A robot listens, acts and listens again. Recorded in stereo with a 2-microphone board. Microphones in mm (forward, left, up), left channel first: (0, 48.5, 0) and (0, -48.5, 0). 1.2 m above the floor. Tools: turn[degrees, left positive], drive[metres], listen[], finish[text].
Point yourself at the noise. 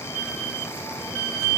Action: listen[]
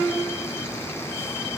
Action: listen[]
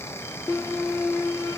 Action: finish[I can't make out anything.]